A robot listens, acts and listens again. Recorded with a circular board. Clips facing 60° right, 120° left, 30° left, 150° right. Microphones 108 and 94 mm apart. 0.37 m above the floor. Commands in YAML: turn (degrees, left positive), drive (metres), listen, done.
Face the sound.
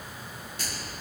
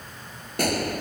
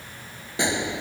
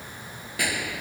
turn: 95
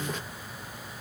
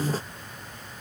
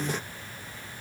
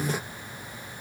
done: "Facing where the gunshot came from. I can't hear it now."